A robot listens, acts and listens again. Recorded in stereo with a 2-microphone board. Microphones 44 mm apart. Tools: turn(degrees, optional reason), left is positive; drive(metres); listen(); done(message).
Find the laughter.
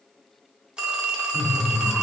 turn(degrees=-25, reason="The laughter: about 25° right or 155° right.")
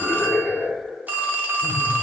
done("Facing the laughter.")